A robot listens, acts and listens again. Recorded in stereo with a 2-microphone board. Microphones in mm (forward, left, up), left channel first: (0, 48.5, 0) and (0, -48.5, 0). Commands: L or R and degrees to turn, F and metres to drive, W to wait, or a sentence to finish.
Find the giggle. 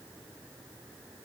W
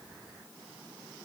W
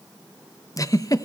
L40
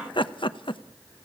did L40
L95
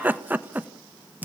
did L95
R20
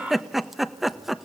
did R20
Found it: a giggle, straight ahead.